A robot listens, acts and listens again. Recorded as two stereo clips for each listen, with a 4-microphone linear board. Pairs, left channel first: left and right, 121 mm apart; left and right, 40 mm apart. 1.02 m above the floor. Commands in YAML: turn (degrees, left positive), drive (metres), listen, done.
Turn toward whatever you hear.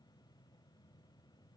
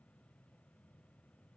listen: true
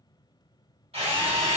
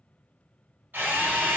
turn: -55
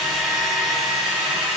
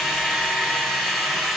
done: "Found it: a drill, straight ahead, 1 to 2 m away."